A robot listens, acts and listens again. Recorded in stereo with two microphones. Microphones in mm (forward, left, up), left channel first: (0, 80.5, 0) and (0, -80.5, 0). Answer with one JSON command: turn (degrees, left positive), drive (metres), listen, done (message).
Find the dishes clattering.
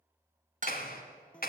{"turn": -55}
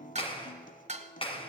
{"turn": -55}
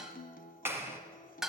{"done": "Facing the dishes clattering."}